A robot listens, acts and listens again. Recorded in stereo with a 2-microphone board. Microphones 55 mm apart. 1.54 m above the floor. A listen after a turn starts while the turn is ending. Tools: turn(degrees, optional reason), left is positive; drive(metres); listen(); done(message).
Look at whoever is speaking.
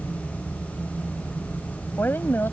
turn(degrees=40, reason="The woman speaking: about 40° left or 140° left.")
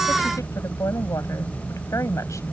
turn(degrees=100, reason="So it is at 100° left.")
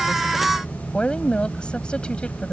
turn(degrees=20, reason="The woman speaking is now 20° left.")
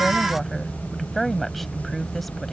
done("Facing the woman speaking.")